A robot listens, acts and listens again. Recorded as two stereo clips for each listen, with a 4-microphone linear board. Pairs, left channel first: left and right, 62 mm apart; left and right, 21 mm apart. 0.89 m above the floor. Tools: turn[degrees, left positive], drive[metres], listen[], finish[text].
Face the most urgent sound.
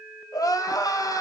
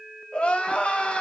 Thought: The crying: about 75° left or 105° left.
Action: turn[75]
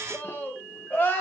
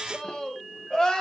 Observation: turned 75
Thought: So it is at 35° left.
Action: turn[35]
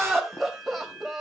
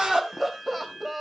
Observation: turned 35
Action: finish[Facing the crying, 2 to 4 m away.]